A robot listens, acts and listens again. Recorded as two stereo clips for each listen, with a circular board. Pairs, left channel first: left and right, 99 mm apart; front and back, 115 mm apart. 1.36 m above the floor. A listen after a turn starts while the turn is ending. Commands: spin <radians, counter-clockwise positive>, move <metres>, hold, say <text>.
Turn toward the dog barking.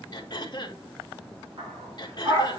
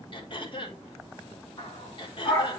spin -0.87
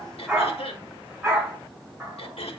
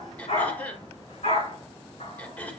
spin -0.17
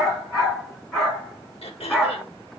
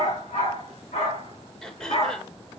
say Found it: a dog barking, straight ahead, over 4 m away.